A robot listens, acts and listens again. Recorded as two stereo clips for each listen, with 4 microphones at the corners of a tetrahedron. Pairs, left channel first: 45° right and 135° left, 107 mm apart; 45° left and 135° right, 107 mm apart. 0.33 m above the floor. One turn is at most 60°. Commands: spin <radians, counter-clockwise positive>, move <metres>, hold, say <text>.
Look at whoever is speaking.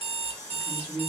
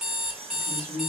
spin -1.05
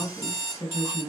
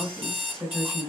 spin -0.79
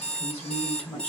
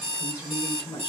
spin 0.26
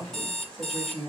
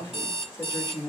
spin 0.61
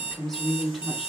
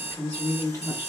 spin 0.96
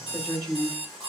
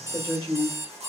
spin 0.35
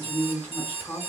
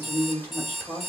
say Facing the woman speaking, 1 to 2 m away.